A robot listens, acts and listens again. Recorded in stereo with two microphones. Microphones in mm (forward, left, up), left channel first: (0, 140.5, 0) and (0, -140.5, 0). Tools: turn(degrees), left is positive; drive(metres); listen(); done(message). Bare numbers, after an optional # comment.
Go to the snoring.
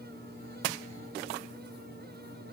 listen()
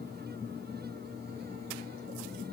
listen()
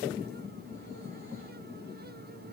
done("I can't make out snoring to turn to.")